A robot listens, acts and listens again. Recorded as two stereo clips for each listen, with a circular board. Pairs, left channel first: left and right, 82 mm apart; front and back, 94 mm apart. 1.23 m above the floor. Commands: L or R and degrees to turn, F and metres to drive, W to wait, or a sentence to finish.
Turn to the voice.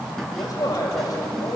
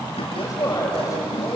L55
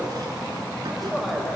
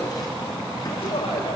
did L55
W
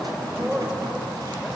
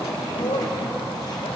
Found it: a man speaking, straight ahead.